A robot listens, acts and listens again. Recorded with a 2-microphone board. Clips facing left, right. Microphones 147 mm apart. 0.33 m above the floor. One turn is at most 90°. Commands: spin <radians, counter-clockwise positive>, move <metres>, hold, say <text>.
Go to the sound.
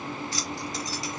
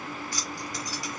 spin 0.35
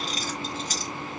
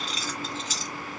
spin 1.57
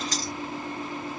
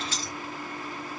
spin 0.70
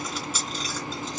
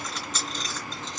spin 0.17
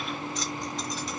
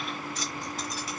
move 1.0
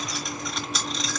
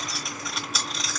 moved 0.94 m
move 1.0
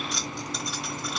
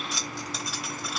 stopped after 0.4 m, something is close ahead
say Arrived at the keys jangling, straight ahead.